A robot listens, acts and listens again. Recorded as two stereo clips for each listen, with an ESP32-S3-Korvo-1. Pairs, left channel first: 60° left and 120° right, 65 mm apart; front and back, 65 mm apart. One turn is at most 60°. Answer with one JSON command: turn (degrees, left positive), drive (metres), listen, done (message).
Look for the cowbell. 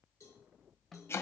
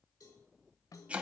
{"turn": 20}
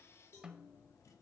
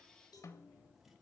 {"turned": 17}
{"done": "Facing the cowbell."}